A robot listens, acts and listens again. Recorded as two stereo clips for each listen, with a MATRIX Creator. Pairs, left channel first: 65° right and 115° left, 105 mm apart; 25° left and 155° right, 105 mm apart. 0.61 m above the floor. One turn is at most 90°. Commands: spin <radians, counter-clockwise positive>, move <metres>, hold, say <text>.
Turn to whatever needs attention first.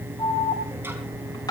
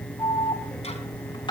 spin -0.26
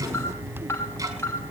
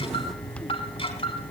say Found it: an alarm, straight ahead.